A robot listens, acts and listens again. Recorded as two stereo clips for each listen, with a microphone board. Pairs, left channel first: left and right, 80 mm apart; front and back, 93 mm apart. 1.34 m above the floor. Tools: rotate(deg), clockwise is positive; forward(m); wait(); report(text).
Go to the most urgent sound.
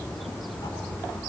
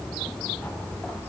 wait()
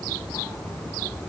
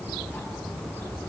wait()
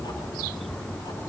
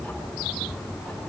report("I can't make out anything urgent to turn to.")